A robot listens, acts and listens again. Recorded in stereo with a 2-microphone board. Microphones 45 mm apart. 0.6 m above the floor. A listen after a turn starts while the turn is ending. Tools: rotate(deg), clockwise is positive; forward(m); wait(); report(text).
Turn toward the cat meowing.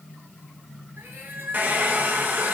rotate(55)
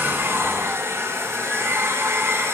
wait()
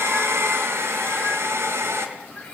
wait()
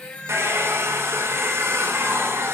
rotate(-25)
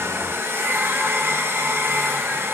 wait()
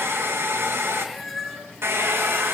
report("Found it: a cat meowing, straight ahead, 2 to 4 m away.")